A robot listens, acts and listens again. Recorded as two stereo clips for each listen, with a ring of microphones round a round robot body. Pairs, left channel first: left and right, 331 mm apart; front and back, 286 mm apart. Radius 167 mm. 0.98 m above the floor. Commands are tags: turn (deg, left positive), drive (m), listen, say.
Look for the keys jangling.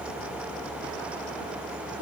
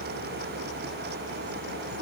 <listen/>
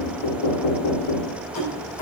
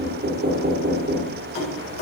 <turn deg="45"/>
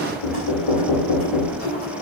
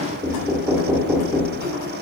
<turn deg="20"/>
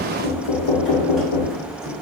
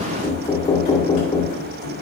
<listen/>
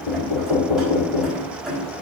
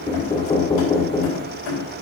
<say>Found it: keys jangling, straight ahead.</say>